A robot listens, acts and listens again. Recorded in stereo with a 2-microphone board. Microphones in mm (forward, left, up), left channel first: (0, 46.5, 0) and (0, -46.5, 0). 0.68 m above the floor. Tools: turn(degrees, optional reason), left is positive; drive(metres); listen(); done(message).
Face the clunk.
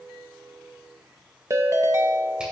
listen()
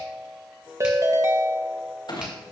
turn(degrees=55, reason="The clunk: about 55° left or 125° left.")
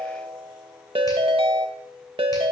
listen()
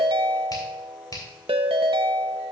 done("I heard a clunk, but can't make it out now. It was about straight ahead or 70° left.")